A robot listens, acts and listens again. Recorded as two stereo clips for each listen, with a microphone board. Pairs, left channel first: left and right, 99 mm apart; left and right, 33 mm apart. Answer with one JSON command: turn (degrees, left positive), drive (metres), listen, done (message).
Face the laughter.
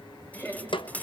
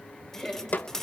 {"turn": 20}
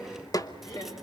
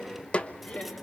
{"turn": 40}
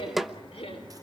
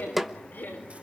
{"turn": 105}
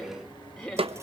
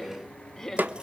{"done": "Facing the laughter, over 4 m away."}